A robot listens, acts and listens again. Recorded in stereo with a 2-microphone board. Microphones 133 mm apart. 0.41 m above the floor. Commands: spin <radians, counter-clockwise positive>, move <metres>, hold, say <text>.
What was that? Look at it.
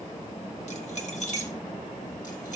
spin 1.05
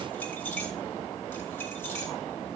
spin 0.26
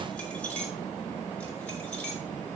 spin 0.17
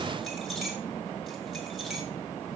hold
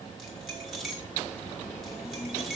say Facing the keys jangling, over 4 m away.